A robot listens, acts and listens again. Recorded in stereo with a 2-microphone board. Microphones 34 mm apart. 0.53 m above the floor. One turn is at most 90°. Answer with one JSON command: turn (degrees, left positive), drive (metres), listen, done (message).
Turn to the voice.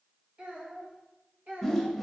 {"turn": -50}
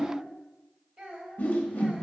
{"turn": -30}
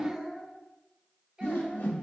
{"turn": -15}
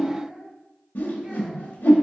{"listen": true}
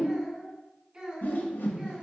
{"turn": -15}
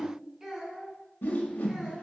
{"done": "Facing the child speaking."}